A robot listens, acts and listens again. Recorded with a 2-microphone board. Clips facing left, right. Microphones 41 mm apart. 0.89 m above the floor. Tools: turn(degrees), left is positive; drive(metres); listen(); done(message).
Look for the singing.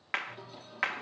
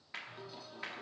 turn(degrees=30)
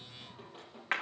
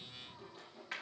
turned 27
turn(degrees=140)
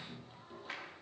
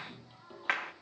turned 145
turn(degrees=-15)
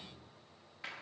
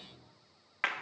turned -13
done("Found it: singing, straight ahead, over 4 m away.")